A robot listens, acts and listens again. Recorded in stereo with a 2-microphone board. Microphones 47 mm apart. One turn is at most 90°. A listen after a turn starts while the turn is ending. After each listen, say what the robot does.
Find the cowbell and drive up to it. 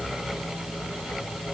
Keep listening.
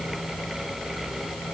Keep listening.
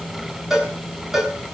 Turn 30° right.
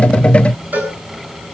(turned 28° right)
Turn 90° right.
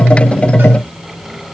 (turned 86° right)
Turn 55° right.
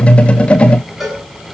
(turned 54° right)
Drive 1.0 m forward.
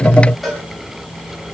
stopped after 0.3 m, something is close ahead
Something is in my way. I am facing the cowbell but have not reached it.